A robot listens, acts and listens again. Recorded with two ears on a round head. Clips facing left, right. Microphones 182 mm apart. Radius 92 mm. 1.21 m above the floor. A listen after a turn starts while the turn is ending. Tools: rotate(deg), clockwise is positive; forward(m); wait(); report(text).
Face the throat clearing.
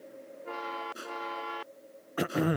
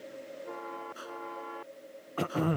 rotate(-15)
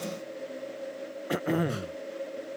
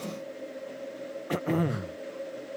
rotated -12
report("Found it: throat clearing, straight ahead.")